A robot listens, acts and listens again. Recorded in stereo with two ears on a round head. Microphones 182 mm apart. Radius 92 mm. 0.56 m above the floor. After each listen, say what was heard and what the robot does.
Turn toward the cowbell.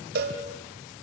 The cowbell: about 50° right or 130° right. Turn 50° right.
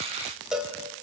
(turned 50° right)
Facing the cowbell, 2 to 4 m away.